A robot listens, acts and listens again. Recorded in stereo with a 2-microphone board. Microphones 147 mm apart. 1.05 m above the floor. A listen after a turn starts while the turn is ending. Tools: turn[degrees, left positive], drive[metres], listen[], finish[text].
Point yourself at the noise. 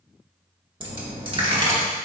Thought: The dropped coin: about 35° right or 145° right.
Action: turn[-35]
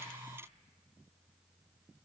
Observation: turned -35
Action: listen[]
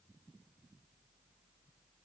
Action: finish[I heard a dropped coin, but can't make it out now. It was about straight ahead or 110° right.]